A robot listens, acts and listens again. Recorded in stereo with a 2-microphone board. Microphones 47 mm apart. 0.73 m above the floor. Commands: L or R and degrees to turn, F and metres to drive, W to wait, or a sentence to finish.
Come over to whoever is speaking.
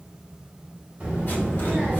R25
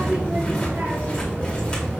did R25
R135
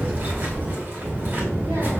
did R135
R55
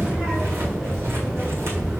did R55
F1.0
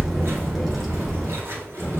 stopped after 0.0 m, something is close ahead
Something is in my way. I am facing the child speaking but have not reached it.